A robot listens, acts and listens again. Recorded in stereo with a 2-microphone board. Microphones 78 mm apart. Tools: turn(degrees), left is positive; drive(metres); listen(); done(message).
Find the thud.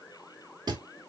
turn(degrees=-65)
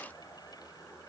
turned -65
listen()
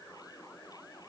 done("I heard a thud, but can't make it out now. It was about straight ahead or 50° right.")